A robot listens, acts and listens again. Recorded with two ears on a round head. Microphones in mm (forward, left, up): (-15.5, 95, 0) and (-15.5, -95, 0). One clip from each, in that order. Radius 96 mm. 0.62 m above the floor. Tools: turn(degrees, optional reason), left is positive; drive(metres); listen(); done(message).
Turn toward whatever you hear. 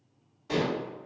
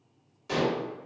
turn(degrees=-50, reason="The dishes clattering: about 50° right or 130° right.")
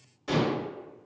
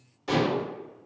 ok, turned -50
done("Facing the dishes clattering, 1 to 2 m away.")